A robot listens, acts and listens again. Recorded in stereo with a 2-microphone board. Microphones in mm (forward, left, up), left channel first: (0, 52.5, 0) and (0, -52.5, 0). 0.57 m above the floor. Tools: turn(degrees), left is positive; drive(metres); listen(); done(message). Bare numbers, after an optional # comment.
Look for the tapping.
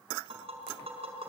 # The tapping: about 70° right or 110° right.
turn(-70)
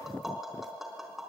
done("Found it: tapping, straight ahead.")